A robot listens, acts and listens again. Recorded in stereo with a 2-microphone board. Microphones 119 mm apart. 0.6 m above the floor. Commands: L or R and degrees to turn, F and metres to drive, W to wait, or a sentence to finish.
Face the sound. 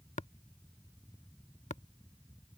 L90
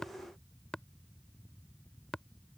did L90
Found it: tapping, straight ahead.